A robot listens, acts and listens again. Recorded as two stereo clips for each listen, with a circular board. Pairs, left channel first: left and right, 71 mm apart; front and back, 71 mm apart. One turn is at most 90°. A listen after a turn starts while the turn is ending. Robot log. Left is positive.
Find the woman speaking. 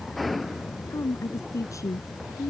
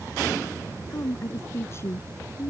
note: The woman speaking: 50° left.
cmd yaw +50
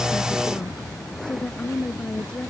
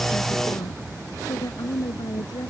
note: The woman speaking is now 15° left.
cmd yaw +15
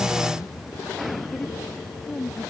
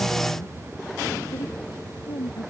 note: The woman speaking is now 10° left.
cmd yaw +10
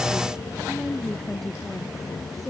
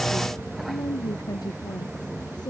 end: Facing the woman speaking.